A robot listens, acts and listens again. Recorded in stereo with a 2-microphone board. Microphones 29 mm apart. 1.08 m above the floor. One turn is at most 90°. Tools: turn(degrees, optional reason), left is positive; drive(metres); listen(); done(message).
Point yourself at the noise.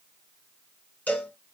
turn(degrees=65, reason="The cowbell: about 65° left or 115° left.")
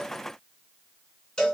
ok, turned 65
turn(degrees=35, reason="So it is at 35° left.")
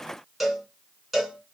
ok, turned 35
done("Facing the cowbell, 1 to 2 m away.")